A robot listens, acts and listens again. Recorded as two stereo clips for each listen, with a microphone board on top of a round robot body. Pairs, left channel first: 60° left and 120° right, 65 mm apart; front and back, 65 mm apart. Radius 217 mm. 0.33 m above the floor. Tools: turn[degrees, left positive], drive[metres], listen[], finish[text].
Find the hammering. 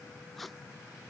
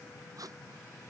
Action: listen[]
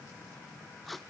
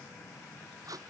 Action: listen[]
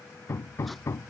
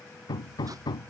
Thought: The hammering: 10° left.
Action: turn[10]
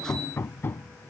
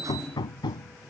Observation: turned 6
Action: finish[Facing the hammering.]